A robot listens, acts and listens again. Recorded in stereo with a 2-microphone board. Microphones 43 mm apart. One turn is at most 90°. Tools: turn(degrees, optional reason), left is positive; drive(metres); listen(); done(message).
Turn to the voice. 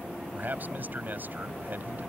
turn(degrees=-45, reason="The man speaking: about 45° right or 135° right.")
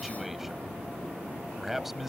done("Found it: a man speaking, straight ahead.")